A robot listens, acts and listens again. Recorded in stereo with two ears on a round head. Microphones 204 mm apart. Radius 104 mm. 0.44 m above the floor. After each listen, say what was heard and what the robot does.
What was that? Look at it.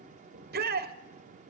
The shout: about 40° right or 140° right. Turn 40° right.
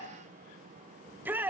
So it is at 10° right. Turn 10° right.
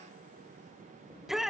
Found it: a shout, straight ahead, 1 to 2 m away.